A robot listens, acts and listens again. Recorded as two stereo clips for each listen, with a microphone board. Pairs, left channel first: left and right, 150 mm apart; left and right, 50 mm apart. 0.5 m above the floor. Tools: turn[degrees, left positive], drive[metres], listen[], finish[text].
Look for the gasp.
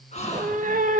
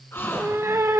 Thought: The gasp: about 50° left or 130° left.
Action: turn[50]
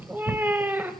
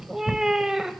Action: listen[]
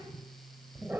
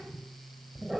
Action: finish[I heard a gasp, but can't make it out now. It was about straight ahead or 80° left.]